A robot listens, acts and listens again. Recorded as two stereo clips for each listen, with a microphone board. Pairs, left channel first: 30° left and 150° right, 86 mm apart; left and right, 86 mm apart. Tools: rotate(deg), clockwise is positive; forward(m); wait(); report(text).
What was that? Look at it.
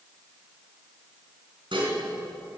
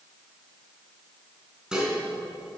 rotate(170)
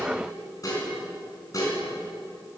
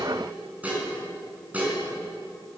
rotate(20)
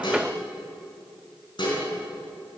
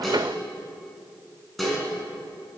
report("Facing the dishes clattering, over 4 m away.")